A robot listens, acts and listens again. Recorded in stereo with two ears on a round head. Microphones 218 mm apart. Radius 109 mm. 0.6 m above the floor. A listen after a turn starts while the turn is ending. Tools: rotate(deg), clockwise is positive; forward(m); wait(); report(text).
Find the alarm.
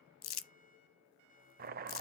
wait()
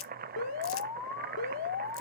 rotate(-65)
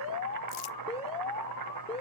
rotate(-25)
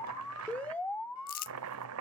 report("Facing the alarm.")